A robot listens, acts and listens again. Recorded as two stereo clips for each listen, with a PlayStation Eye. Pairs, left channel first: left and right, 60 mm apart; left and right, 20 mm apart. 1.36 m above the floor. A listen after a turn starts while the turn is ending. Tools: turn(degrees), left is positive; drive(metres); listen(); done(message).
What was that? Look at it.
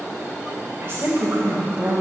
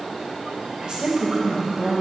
turn(degrees=-30)
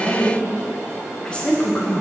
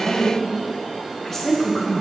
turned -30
turn(degrees=30)
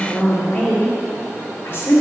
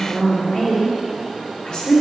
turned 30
turn(degrees=45)
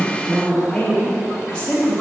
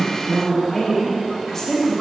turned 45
turn(degrees=15)
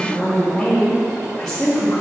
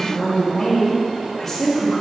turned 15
done("Facing the woman speaking, 1 to 2 m away.")